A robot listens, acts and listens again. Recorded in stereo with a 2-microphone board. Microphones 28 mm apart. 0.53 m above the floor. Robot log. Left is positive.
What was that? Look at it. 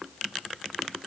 cmd idle
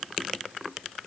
cmd idle
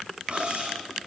note: The cutlery clinking: about 45° right or 135° right.
cmd yaw -45
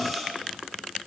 end: Facing the cutlery clinking, 2 to 4 m away.